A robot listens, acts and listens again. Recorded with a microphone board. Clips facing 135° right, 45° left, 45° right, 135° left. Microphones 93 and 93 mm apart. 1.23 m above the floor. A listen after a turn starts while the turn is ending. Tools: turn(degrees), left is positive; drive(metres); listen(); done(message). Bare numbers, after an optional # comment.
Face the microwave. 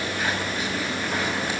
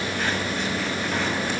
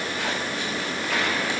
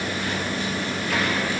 listen()
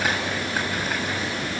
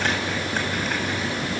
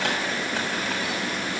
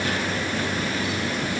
listen()
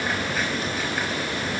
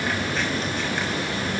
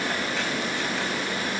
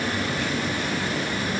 done("I can't make out a microwave to turn to.")